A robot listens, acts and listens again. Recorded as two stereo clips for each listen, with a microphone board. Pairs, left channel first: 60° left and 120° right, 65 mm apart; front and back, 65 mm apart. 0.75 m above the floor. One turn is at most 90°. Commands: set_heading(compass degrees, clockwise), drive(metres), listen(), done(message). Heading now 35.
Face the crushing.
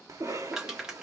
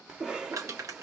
set_heading(305)
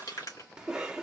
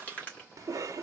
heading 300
set_heading(235)
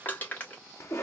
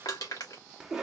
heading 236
done("Facing the crushing.")